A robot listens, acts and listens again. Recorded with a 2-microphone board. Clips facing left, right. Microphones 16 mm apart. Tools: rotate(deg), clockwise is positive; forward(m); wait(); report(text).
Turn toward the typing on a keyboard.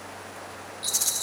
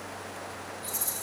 wait()
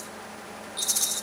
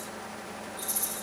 wait()
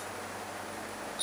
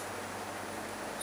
report("I can't make out typing on a keyboard to turn to.")